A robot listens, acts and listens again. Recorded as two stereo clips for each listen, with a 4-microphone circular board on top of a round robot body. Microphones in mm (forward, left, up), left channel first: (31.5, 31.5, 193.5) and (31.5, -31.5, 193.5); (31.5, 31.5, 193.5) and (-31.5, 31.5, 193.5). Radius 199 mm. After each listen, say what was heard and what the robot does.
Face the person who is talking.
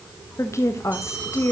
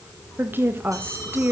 The woman speaking: 125° left. Turn 125° left.
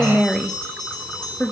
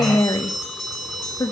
The woman speaking is now 10° left. Turn 10° left.
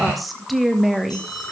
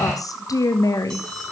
Facing the woman speaking, 1 to 2 m away.